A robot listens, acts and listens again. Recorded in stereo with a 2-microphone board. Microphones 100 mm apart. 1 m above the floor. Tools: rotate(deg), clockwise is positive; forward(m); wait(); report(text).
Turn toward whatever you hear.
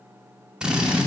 rotate(30)
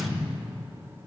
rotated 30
wait()
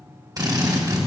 rotate(140)
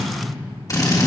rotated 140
rotate(-35)
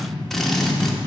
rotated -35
report("Found it: a drill, straight ahead, 1 to 2 m away.")